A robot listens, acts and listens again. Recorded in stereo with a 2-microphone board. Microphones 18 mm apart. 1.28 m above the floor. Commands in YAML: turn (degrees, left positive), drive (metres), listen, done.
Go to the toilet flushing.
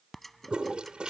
turn: -70
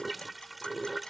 drive: 1.0
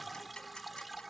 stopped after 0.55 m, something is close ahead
done: "Blocked. The toilet flushing is further on, straight ahead."